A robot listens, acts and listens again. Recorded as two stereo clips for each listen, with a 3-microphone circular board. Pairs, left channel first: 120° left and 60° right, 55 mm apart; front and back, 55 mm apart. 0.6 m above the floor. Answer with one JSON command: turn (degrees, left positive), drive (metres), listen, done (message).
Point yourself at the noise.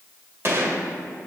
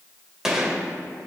{"turn": -100}
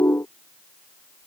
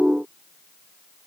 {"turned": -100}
{"done": "I heard a gunshot from this way, but can't make it out now."}